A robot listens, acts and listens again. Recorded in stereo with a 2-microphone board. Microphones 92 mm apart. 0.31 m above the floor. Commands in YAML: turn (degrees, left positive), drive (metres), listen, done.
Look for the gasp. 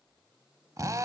listen: true
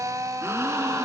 turn: -30
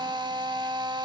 listen: true
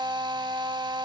done: "I heard a gasp, but can't make it out now. It was about straight ahead or 120° right."